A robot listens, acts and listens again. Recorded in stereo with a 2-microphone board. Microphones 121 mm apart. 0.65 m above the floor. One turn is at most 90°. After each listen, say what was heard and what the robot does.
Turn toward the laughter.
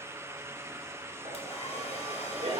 The laughter: about 60° right or 120° right. Turn 60° right.
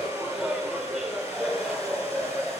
Facing the laughter, 1 to 2 m away.